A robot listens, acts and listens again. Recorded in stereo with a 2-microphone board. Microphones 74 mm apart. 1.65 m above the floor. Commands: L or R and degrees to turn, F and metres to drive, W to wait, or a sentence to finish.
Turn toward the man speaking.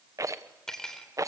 W
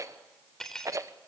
W
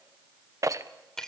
I can't make out a man speaking to turn to.